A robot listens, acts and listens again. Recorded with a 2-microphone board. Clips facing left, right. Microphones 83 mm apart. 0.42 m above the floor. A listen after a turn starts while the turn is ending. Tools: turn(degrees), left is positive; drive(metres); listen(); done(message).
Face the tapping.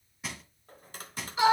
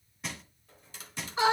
turn(degrees=50)
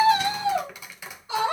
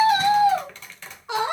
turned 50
turn(degrees=10)
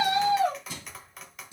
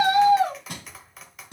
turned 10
done("Found it: tapping, straight ahead, 1 to 2 m away.")